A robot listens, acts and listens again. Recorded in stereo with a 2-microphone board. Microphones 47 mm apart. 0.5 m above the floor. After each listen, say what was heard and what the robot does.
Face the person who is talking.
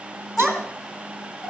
Turn 30° left.
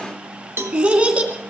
So it is at 25° right. Turn 25° right.
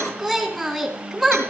Facing the child speaking, 2 to 4 m away.